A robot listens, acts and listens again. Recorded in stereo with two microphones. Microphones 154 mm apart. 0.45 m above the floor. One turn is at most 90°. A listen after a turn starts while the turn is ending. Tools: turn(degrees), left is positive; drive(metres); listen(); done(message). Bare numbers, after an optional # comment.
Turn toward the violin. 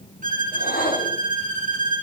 # The violin: about 55° right or 125° right.
turn(-55)
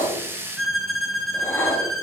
done("Found it: a violin, straight ahead, 1 to 2 m away.")